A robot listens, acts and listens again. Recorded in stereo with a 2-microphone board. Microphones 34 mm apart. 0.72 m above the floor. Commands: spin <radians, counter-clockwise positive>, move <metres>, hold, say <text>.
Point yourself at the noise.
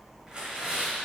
spin -0.44
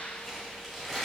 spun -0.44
say Facing the tearing paper.